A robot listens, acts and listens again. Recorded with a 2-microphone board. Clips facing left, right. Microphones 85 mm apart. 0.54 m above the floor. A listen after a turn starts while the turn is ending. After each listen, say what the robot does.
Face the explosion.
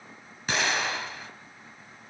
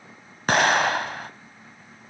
Turn 55° right.
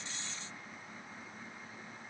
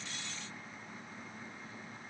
Keep listening.
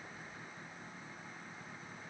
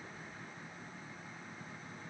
I heard an explosion, but can't make it out now. It was about straight ahead or 70° right.